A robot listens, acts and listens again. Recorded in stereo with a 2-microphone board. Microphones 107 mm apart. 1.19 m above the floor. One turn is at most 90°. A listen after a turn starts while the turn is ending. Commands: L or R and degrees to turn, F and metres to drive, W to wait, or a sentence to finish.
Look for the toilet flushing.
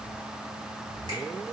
W
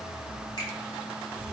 W
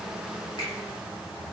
I can't make out a toilet flushing to turn to.